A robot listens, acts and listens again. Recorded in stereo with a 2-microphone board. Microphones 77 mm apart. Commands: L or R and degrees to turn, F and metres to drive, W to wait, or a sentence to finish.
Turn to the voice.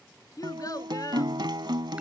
L50
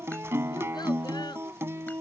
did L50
W
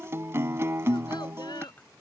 W
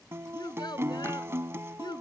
L80
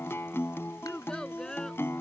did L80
L10
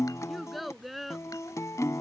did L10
Facing the child speaking.